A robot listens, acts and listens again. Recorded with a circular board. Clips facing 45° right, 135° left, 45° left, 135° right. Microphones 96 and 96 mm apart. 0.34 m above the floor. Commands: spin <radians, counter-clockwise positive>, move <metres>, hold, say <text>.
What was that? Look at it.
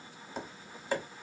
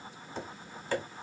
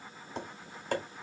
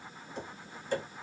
spin 0.52
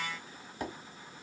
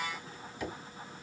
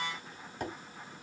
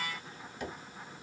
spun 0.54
say Facing the tapping, 1 to 2 m away.